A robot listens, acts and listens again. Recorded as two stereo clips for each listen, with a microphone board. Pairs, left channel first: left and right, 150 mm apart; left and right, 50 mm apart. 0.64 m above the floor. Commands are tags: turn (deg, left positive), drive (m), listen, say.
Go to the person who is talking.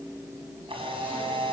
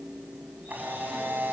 <listen/>
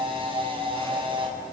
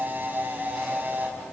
<listen/>
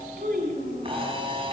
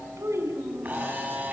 <turn deg="-90"/>
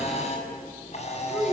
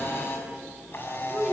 <drive m="1.0"/>
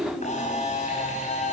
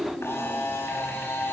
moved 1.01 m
<drive m="1.0"/>
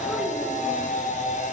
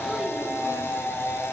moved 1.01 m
<listen/>
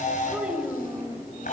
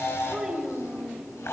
<drive m="1.0"/>
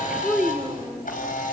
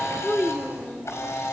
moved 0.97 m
<turn deg="-10"/>
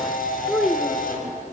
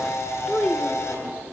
<drive m="1.0"/>
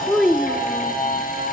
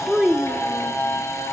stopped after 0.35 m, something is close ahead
<say>Arrived at the child speaking, straight ahead.</say>